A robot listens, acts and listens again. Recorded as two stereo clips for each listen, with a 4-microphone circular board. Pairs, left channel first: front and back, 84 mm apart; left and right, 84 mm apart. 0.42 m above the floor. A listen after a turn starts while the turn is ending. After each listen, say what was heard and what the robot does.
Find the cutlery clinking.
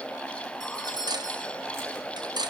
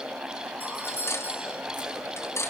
The cutlery clinking: 145° left. Turn 145° left.
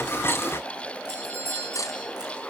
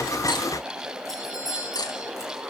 The cutlery clinking is now 50° left. Turn 50° left.
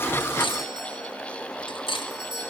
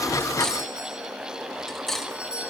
Facing the cutlery clinking, 1 to 2 m away.